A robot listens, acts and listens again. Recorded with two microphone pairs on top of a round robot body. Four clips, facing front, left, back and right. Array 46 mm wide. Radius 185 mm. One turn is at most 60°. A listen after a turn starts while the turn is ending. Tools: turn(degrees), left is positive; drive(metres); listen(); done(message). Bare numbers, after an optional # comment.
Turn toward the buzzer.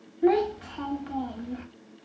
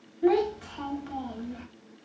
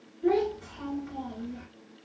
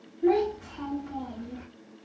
listen()
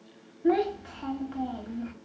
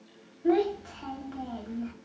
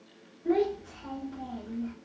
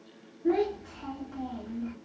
listen()
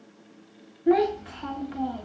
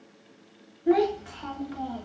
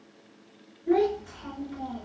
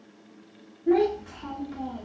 done("I can't make out a buzzer, only a child speaking.")